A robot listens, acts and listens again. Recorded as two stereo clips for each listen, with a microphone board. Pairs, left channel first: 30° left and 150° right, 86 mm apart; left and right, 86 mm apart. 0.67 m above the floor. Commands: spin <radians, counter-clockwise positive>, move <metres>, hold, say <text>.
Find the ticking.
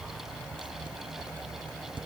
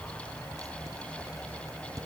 hold
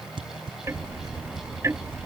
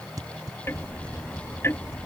spin 2.62
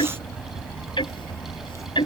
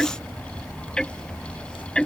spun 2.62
spin 0.17
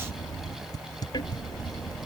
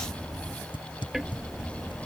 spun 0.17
say Facing the ticking.